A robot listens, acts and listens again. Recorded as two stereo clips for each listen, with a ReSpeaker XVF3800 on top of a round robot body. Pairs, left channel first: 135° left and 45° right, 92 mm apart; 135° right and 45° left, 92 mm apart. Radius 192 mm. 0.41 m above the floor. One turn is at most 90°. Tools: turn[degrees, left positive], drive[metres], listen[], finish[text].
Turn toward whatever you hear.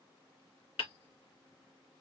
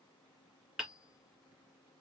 Thought: The hammering: 130° left.
Action: turn[90]
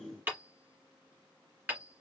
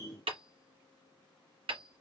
Thought: The hammering is now 25° left.
Action: turn[25]
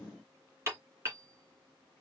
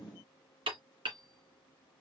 Thought: The hammering is now 15° left.
Action: turn[15]
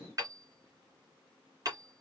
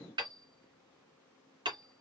Thought: The hammering is now 10° left.
Action: turn[10]
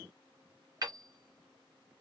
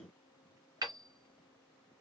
Action: finish[Facing the hammering.]